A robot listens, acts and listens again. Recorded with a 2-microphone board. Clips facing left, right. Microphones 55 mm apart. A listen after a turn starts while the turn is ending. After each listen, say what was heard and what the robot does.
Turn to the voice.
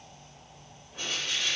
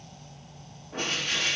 Keep listening.
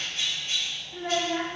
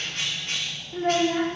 Turn 30° right.
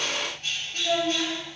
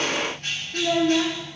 So it is at 135° right. Turn 135° right.
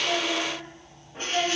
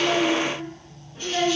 The child speaking is now 20° right. Turn 20° right.
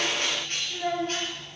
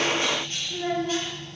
Found it: a child speaking, straight ahead.